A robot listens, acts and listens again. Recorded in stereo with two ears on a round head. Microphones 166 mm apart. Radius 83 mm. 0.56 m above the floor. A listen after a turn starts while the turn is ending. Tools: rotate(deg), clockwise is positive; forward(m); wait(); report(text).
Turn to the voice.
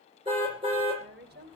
rotate(60)
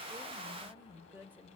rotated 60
rotate(15)
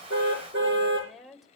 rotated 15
report("Found it: a woman speaking, straight ahead, 2 to 4 m away.")